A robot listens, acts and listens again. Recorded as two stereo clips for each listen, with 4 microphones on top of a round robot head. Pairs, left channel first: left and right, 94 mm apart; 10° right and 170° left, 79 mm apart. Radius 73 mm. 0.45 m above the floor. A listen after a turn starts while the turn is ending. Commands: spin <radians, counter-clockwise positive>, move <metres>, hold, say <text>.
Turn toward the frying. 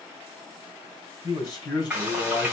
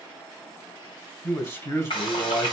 spin -0.17
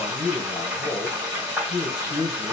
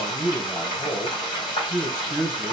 spin -0.17
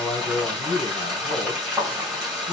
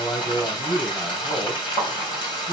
say Facing the frying.